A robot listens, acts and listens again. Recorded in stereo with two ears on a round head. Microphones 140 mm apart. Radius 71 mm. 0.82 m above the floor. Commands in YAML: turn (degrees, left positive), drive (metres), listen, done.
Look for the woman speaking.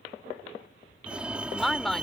turn: 30
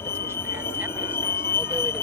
listen: true
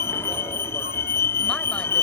listen: true
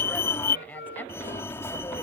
turn: 30
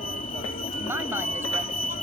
listen: true
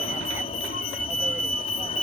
listen: true
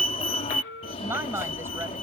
turn: -15
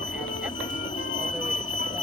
listen: true
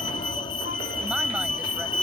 listen: true
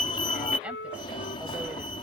done: "I heard a woman speaking from this way, but can't make it out now."